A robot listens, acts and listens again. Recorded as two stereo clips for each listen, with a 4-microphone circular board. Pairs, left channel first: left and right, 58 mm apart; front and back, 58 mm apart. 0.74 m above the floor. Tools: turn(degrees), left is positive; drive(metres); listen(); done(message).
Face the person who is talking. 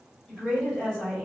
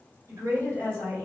turn(degrees=160)
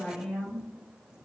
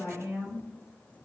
turn(degrees=15)
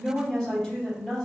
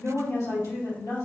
done("Facing the woman speaking, 1 to 2 m away.")